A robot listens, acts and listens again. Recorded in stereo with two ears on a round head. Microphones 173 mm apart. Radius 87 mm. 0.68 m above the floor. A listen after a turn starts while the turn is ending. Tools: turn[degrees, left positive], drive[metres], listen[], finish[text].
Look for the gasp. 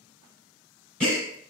Action: turn[30]
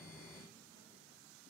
Action: listen[]
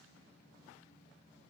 Action: finish[I heard a gasp, but can't make it out now. It was about 25° right or 145° left.]